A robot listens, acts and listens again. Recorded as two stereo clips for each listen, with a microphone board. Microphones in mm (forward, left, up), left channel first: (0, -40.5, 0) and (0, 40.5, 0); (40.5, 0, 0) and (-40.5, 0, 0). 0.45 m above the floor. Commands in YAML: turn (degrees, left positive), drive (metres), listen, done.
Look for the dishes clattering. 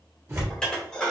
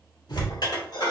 turn: -10
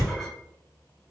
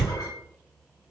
listen: true
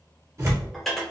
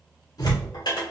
done: "Facing the dishes clattering."